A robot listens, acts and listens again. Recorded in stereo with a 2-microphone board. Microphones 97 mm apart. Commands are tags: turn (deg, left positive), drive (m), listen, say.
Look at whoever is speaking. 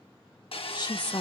<turn deg="50"/>
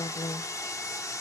<turn deg="85"/>
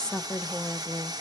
<say>Facing the woman speaking.</say>